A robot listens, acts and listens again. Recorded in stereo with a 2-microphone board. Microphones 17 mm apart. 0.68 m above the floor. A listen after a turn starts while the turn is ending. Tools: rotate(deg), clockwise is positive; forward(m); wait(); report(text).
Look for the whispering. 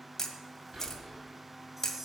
rotate(60)
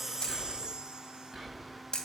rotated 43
rotate(20)
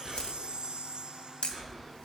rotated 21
report("Facing the whispering, over 4 m away.")